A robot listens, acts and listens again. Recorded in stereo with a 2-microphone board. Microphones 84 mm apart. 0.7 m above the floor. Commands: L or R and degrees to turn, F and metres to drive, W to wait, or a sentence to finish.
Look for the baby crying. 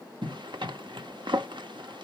W
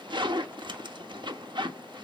W
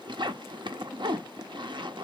I can't make out a baby crying to turn to.